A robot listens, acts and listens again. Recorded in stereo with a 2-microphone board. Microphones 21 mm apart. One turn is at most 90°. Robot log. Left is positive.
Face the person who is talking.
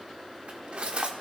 cmd idle
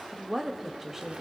cmd yaw -30
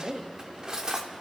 note: So it is at 135° right.
cmd yaw -90
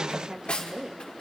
note: The woman speaking is now 40° right.
cmd yaw -40
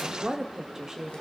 note: The woman speaking is now 30° right.
cmd yaw -30
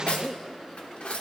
end: Found it: a woman speaking, straight ahead.